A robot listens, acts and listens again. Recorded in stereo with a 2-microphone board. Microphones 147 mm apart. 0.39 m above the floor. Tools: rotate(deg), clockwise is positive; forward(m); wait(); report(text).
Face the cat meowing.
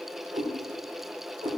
rotate(30)
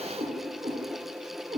rotate(150)
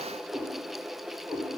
rotate(10)
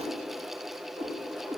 rotate(10)
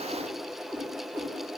report("Facing the cat meowing.")